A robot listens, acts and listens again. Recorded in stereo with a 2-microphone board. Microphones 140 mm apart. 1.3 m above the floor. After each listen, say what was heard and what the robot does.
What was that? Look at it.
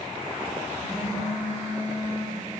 The phone buzzing: about 50° left or 130° left. Turn 50° left.
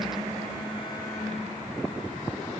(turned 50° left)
Found it: a phone buzzing, straight ahead, 2 to 4 m away.